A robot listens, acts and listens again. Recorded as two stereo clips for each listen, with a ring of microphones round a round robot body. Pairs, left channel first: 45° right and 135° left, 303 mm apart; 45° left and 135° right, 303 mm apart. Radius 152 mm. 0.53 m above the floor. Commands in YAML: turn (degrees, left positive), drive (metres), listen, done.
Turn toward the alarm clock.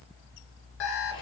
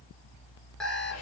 turn: -45
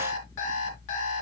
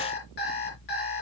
turn: -15
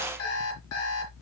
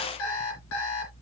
done: "Facing the alarm clock."